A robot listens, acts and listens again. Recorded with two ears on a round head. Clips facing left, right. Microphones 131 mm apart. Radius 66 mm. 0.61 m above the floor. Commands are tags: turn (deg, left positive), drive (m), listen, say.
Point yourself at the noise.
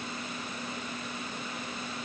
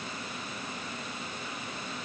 <listen/>
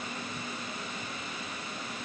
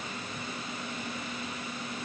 <listen/>
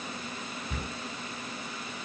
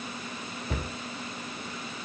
<turn deg="-55"/>
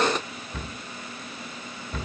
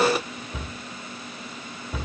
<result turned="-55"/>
<turn deg="-10"/>
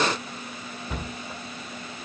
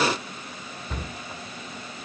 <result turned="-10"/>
<say>Facing the cupboard door, 2 to 4 m away.</say>